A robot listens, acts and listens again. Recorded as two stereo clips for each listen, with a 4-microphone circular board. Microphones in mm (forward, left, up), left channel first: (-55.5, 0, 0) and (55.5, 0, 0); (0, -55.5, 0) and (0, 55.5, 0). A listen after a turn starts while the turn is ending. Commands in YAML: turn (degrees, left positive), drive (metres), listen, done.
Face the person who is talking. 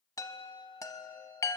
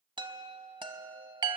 listen: true
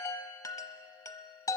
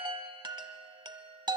listen: true
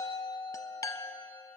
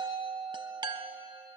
done: "I can't make out anyone speaking to turn to."